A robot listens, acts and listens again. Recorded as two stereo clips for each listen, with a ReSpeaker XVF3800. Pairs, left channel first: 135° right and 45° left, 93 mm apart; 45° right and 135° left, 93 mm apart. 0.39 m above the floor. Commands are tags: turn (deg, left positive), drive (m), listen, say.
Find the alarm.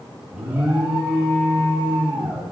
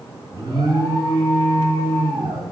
<turn deg="120"/>
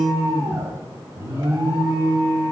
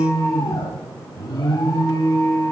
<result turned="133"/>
<turn deg="-10"/>
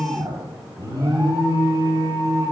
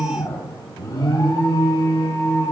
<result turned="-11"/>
<say>Found it: an alarm, straight ahead.</say>